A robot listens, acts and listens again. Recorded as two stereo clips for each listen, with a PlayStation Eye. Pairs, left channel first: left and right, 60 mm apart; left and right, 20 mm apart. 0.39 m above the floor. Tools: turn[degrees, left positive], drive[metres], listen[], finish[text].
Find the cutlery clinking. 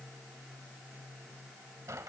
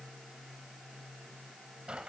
Action: listen[]
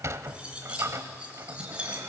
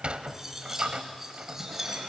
Thought: The cutlery clinking: about 20° right or 160° right.
Action: turn[-20]
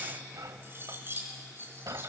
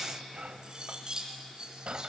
Thought: So it is at 140° right.
Action: turn[-140]
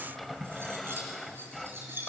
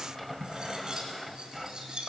Thought: The cutlery clinking is now 40° right.
Action: turn[-40]
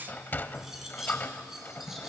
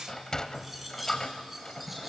Action: finish[Found it: cutlery clinking, straight ahead, 2 to 4 m away.]